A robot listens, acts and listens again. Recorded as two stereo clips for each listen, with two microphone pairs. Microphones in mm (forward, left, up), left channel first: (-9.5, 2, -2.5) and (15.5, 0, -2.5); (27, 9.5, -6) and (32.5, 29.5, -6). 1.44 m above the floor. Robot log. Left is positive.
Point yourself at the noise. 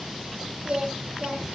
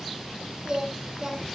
note: The singing: 25° left.
cmd yaw +25
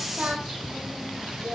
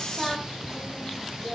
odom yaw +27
end: Found it: singing, straight ahead.